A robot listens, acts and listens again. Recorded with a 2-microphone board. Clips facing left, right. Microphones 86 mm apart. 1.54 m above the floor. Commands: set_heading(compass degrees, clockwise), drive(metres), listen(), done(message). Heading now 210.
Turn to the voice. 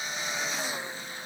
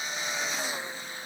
listen()
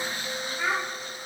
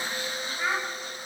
set_heading(120)
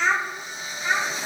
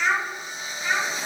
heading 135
set_heading(115)
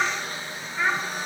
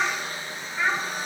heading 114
done("Found it: a child speaking, straight ahead, 1 to 2 m away.")